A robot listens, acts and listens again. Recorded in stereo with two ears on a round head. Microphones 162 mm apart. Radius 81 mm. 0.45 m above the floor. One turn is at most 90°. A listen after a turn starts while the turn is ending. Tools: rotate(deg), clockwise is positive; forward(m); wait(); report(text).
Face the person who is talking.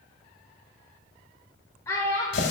rotate(-15)
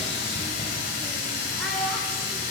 wait()
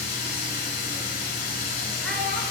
wait()
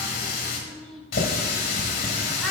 report("I heard a child speaking, but can't make it out now. It was about straight ahead or 150° left.")